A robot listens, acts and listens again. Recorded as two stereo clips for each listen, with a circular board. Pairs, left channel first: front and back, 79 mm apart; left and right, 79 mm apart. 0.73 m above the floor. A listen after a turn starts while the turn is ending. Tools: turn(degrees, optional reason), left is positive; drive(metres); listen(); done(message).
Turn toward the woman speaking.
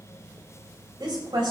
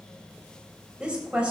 turn(degrees=-165, reason="The woman speaking: 165° right.")
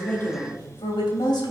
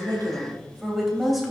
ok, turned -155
done("Found it: a woman speaking, straight ahead.")